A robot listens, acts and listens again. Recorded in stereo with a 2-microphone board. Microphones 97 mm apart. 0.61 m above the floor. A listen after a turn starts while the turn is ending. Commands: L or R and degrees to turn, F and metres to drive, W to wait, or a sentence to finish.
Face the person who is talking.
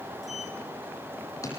W
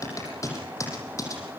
W
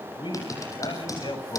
L55
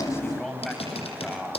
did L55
Found it: a man speaking, straight ahead.